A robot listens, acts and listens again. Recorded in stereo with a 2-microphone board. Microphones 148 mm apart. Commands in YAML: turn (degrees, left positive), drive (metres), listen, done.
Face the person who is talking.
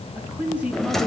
turn: -30
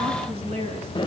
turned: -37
turn: -135
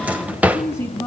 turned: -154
turn: 20
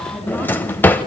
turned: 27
turn: -10
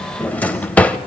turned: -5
listen: true
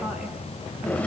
done: "I heard a woman speaking from this way, but can't make it out now."